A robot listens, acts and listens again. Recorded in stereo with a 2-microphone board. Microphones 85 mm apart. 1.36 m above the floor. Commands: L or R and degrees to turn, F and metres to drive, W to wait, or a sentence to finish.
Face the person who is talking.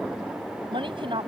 R90
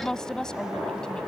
Found it: a woman speaking, straight ahead.